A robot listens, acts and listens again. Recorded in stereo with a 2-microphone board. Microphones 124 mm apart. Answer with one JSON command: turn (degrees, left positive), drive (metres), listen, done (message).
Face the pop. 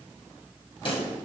{"turn": 45}
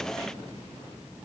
{"listen": true}
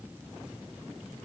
{"done": "I heard a pop, but can't make it out now. It was about straight ahead or 90° left."}